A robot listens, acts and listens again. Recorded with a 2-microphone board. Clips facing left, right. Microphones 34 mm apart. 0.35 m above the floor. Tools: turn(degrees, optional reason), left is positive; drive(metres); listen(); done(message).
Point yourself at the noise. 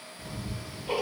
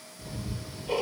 turn(degrees=45, reason="The ticking: about 45° left or 135° left.")
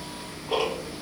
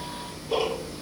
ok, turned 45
turn(degrees=85, reason="So it is at 85° left.")
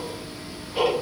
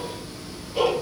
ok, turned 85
turn(degrees=25, reason="The ticking is now 25° left.")
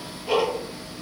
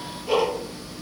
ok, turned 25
turn(degrees=10, reason="The ticking is now 10° left.")
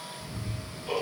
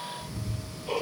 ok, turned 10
done("Facing the ticking.")